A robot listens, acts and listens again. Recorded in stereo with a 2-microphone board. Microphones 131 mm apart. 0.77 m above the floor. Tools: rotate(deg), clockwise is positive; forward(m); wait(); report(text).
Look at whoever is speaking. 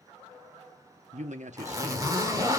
rotate(65)
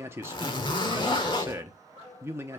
rotate(20)
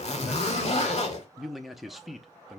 report("Facing the man speaking, under 1 m away.")